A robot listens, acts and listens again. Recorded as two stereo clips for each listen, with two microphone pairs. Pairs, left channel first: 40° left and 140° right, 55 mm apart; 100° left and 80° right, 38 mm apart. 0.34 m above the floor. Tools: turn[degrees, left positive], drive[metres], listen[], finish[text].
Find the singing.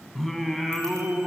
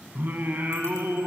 Thought: The singing: 55° right.
Action: turn[-55]
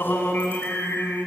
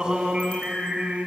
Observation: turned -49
Thought: The singing is now 20° right.
Action: turn[-20]
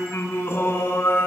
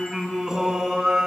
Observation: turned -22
Action: finish[Found it: singing, straight ahead, 2 to 4 m away.]